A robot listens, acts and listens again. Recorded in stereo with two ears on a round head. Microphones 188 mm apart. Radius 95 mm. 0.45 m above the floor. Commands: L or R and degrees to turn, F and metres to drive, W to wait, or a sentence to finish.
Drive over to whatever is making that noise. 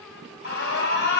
L60
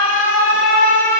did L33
L80
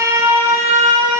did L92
R15
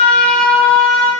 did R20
F1.0
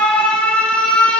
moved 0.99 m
F1.0
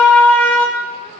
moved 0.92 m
L10
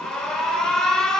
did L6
F1.0
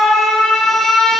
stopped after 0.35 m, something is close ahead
I am next to the alarm.